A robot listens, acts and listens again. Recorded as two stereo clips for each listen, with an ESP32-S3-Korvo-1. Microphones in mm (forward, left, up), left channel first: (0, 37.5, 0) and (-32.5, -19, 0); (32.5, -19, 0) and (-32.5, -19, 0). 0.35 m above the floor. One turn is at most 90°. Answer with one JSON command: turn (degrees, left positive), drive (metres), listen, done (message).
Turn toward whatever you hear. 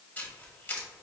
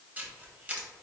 {"turn": 90}
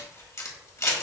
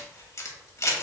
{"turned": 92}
{"turn": 30}
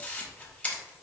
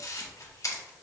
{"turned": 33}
{"done": "Facing the camera shutter, 1 to 2 m away."}